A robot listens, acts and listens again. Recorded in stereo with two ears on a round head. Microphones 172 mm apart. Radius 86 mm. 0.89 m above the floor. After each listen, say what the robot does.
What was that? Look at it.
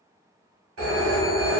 Turn 90° right.
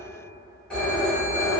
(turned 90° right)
Facing the phone ringing, 1 to 2 m away.